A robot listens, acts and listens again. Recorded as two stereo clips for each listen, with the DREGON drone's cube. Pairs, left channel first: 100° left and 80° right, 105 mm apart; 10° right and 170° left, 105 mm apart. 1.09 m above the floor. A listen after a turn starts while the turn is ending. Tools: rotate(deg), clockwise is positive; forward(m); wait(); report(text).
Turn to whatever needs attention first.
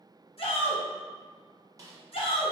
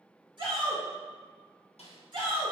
rotate(-125)
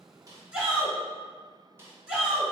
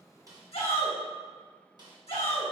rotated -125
report("Found it: a shout, straight ahead, 1 to 2 m away.")